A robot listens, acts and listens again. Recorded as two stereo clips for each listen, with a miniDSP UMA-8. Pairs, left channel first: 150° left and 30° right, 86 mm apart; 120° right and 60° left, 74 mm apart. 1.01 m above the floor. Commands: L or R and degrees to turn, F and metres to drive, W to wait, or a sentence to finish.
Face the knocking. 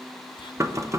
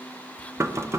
L15
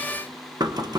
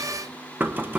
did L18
Found it: knocking, straight ahead.